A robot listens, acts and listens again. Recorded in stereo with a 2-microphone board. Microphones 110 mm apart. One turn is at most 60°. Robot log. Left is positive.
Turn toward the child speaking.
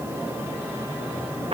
cmd idle
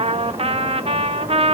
cmd idle
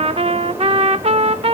end: I can't make out a child speaking to turn to.